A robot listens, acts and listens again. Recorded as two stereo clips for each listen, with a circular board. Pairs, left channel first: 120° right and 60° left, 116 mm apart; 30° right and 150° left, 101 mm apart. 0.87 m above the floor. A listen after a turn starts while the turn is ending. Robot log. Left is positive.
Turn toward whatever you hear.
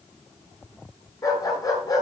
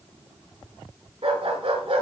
note: The dog barking: straight behind.
cmd yaw +180
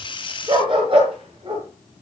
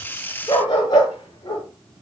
note: The dog barking is now 20° left.
cmd yaw +20
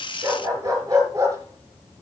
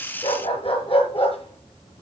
end: Facing the dog barking, over 4 m away.